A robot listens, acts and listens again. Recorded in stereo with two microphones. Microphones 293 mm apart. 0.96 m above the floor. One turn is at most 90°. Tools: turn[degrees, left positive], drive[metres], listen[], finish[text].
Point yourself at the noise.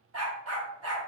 Thought: The dog barking: about 55° right or 125° right.
Action: turn[-55]
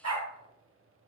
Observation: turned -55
Thought: So it is at 65° right.
Action: turn[-65]
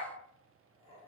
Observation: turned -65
Action: listen[]
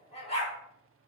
Thought: The dog barking is now 20° left.
Action: turn[20]
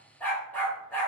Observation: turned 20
Action: finish[Found it: a dog barking, straight ahead.]